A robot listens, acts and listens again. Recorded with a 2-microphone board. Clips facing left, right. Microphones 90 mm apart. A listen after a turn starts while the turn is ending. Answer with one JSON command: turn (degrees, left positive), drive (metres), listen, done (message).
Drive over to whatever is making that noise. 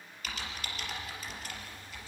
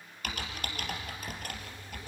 {"turn": -55}
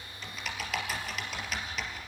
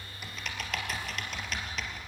{"drive": 1.0}
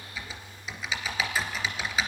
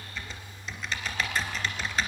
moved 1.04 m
{"drive": 1.0}
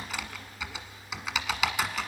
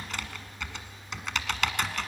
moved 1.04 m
{"drive": 1.0}
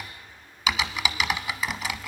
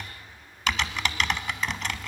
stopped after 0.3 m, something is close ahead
{"done": "Arrived at the typing on a keyboard, straight ahead."}